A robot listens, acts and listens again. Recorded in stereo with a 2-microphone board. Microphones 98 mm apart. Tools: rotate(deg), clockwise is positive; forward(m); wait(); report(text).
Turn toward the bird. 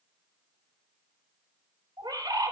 rotate(55)
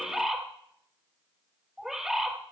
rotate(10)
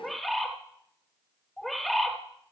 report("Found it: a bird, straight ahead.")